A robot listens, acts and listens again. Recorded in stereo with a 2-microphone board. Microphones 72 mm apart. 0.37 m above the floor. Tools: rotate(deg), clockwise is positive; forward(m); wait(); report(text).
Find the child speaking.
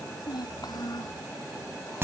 rotate(-65)
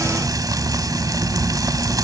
wait()
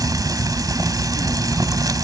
wait()
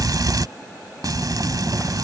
report("I heard a child speaking, but can't make it out now. It was about straight ahead or 50° left.")